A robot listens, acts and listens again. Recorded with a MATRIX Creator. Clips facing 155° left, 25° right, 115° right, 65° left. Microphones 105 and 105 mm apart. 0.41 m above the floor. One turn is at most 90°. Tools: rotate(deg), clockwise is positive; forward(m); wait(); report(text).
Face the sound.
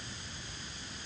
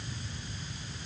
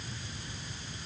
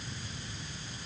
wait()
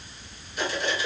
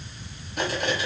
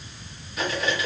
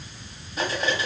rotate(-10)
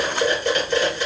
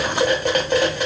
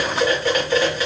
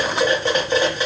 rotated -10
report("Found it: cutlery clinking, straight ahead, 1 to 2 m away.")